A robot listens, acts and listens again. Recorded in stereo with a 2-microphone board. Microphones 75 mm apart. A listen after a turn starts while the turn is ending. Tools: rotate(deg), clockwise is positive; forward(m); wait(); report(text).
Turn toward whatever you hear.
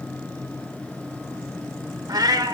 rotate(60)
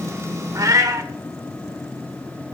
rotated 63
rotate(55)
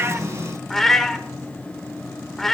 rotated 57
report("Found it: a cat meowing, straight ahead.")